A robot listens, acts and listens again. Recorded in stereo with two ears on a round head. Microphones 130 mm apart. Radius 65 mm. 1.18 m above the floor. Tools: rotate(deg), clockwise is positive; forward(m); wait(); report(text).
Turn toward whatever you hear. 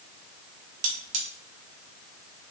rotate(55)
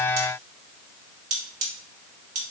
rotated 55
rotate(60)
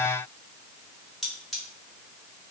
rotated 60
report("Facing the cutlery clinking.")